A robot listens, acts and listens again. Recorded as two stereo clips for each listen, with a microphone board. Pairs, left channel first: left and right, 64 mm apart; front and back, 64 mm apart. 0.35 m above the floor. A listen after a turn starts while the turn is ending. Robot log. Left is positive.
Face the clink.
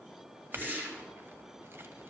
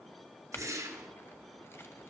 note: The clink: 45° right.
cmd yaw -45
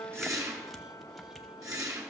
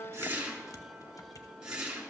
cmd idle
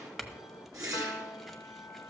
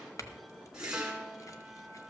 end: Facing the clink, under 1 m away.